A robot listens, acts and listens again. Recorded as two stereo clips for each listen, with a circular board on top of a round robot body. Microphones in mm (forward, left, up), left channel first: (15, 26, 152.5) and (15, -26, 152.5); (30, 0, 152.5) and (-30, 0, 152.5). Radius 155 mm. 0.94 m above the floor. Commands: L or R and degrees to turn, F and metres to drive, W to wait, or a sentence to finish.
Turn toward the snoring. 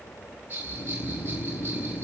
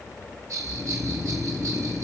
L95
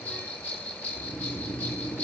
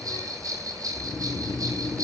L25
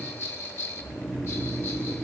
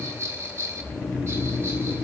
Facing the snoring.